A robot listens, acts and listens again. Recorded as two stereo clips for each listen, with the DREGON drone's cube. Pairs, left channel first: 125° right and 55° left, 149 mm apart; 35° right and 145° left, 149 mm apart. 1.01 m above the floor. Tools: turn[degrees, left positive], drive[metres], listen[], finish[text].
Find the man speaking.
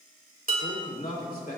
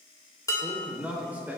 Thought: The man speaking: 140° right.
Action: turn[-140]
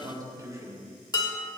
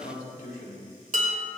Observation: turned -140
Thought: The man speaking is now 15° right.
Action: turn[-15]
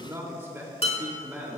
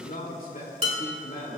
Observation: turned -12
Thought: The man speaking is now 25° right.
Action: turn[-25]
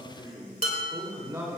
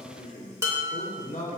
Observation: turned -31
Thought: The man speaking is now 10° right.
Action: turn[-10]
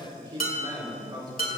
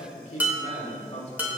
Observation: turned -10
Action: finish[Found it: a man speaking, straight ahead.]